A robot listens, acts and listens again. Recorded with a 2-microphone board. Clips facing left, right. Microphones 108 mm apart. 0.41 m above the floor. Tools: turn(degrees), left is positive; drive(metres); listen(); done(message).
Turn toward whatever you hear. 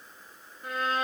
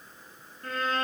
turn(degrees=30)
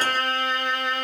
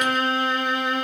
turn(degrees=-20)
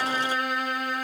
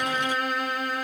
done("Facing the violin, 2 to 4 m away.")